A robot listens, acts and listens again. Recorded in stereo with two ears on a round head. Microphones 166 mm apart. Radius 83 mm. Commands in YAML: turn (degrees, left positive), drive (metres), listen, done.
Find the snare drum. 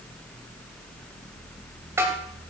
turn: -30
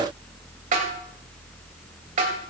turn: -135
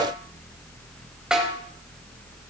done: "Found it: a snare drum, straight ahead, 2 to 4 m away."